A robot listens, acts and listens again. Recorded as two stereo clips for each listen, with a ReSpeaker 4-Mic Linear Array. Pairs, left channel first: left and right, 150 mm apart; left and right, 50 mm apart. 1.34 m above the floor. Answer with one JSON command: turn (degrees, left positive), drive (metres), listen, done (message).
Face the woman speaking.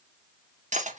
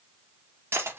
{"listen": true}
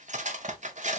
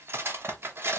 {"listen": true}
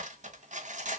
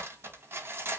{"done": "I can't make out a woman speaking, only cutlery clinking."}